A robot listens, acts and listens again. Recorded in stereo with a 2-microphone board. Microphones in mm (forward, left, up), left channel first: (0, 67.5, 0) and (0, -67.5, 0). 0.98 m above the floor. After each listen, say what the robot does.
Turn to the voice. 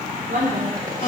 Turn 75° right.
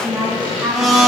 Facing the woman speaking.